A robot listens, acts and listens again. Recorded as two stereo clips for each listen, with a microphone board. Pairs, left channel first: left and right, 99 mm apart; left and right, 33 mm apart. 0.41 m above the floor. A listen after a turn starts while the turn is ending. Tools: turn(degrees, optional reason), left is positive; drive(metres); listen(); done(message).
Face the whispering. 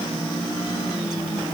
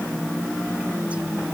listen()
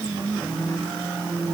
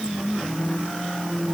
listen()
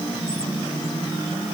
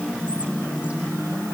done("I can't make out whispering to turn to.")